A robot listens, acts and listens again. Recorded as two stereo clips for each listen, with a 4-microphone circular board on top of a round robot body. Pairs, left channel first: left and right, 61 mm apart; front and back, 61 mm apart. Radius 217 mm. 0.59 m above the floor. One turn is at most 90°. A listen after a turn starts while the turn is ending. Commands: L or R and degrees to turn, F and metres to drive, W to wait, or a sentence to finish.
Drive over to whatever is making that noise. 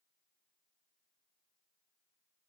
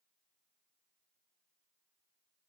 W
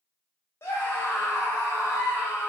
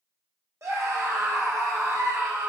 L90
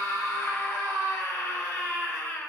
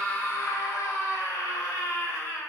L40
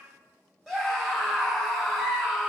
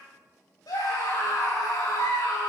F1.0
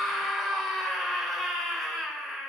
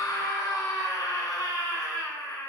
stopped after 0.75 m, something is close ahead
Something is in my way. I am facing the scream but have not reached it.